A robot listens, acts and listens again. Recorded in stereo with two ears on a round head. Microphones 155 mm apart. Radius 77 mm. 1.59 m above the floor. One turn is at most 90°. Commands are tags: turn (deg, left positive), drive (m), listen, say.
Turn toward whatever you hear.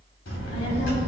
<turn deg="90"/>
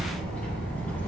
<turn deg="10"/>
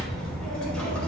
<say>Found it: a child speaking, straight ahead, over 4 m away.</say>